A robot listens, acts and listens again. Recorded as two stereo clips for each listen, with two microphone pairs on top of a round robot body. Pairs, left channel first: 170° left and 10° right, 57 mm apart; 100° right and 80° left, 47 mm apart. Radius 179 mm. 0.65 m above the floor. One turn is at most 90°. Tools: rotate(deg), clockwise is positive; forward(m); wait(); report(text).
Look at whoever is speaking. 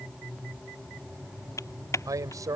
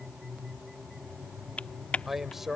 report("Facing the man speaking.")